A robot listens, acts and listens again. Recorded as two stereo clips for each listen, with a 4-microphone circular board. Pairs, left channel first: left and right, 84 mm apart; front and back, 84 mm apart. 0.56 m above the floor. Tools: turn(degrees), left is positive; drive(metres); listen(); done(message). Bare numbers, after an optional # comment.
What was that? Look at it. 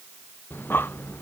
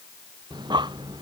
# The breathing: 155° left.
turn(155)
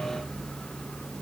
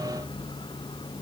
# The breathing is now 10° left.
turn(10)
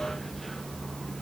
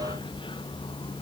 done("Found it: breathing, straight ahead.")